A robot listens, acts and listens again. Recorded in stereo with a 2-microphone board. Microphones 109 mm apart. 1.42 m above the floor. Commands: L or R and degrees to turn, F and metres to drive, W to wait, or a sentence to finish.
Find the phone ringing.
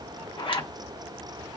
W
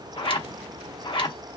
W
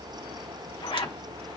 I can't make out a phone ringing, only a zipper.